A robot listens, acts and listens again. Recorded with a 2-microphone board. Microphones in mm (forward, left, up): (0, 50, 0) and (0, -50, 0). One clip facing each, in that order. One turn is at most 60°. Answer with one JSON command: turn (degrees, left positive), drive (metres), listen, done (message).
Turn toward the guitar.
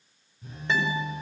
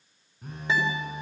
{"turn": -30}
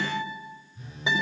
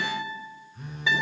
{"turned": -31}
{"turn": 20}
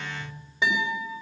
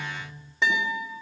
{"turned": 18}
{"done": "Found it: a guitar, straight ahead."}